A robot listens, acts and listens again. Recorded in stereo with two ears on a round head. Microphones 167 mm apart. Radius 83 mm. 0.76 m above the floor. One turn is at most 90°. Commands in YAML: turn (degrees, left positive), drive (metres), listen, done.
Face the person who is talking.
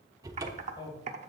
turn: 30
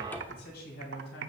turn: 90
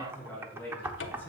turn: 10
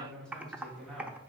done: "Found it: a man speaking, straight ahead, over 4 m away."